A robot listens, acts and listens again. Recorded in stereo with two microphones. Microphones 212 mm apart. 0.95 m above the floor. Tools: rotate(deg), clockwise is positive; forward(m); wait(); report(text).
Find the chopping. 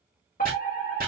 rotate(45)
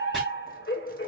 wait()
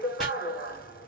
wait()
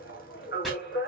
report("I heard chopping, but can't make it out now. It was about straight ahead or 90° right.")